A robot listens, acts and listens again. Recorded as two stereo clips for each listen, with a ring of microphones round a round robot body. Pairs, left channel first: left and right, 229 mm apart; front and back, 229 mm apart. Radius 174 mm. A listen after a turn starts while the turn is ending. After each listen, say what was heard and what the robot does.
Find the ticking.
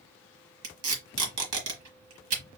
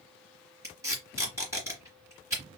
Keep listening.
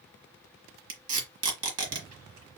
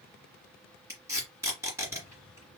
Keep listening.
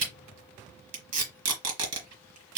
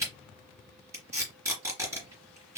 I can't make out ticking, only tape being pulled.